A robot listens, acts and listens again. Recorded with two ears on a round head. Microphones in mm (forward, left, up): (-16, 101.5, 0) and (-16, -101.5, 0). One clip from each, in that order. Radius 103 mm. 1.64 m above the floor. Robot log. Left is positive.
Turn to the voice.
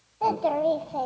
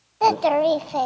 note: The child speaking: about 65° right or 115° right.
cmd yaw -65
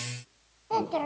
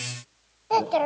note: So it is at 30° right.
cmd yaw -30
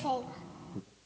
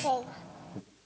note: The child speaking is now 15° right.
cmd yaw -15
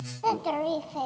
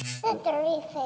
end: Found it: a child speaking, straight ahead.